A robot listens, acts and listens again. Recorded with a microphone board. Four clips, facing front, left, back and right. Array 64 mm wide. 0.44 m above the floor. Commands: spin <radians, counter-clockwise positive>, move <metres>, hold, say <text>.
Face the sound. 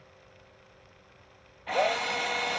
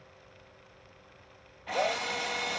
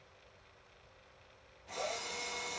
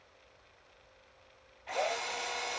spin 0.17
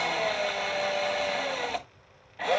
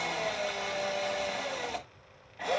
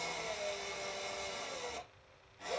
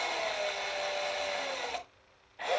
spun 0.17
say Facing the drill.